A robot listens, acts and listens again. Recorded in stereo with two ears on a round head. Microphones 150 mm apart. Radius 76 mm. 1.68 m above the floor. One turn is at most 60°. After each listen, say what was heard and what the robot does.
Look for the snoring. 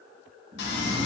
The snoring: about 30° right or 150° right. Turn 30° right.
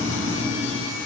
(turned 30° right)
So it is at 120° right. Turn 60° right.
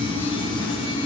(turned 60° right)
The snoring is now 65° right. Turn 60° right.
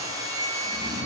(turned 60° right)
The snoring is now 15° right. Turn 15° right.
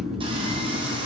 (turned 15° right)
Facing the snoring, 1 to 2 m away.